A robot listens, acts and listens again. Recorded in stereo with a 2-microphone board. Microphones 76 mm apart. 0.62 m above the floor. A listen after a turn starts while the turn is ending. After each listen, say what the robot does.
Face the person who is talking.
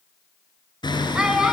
Turn 30° right.
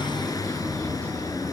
Keep listening.
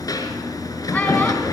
Keep listening.
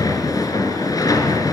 I heard a child speaking, but can't make it out now. It was about 20° left or 140° right.